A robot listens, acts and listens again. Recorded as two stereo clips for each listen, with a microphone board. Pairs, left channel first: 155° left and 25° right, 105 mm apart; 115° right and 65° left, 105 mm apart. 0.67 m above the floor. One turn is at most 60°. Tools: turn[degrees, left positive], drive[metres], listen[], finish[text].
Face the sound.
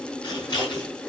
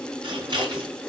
Thought: The scissors: 110° left.
Action: turn[60]
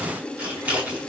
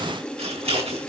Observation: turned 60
Thought: The scissors is now 50° left.
Action: turn[50]
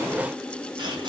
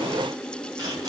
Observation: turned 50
Thought: The scissors is now 20° left.
Action: turn[20]
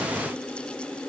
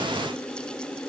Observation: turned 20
Action: listen[]
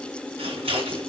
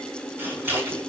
Action: finish[Found it: scissors, straight ahead, over 4 m away.]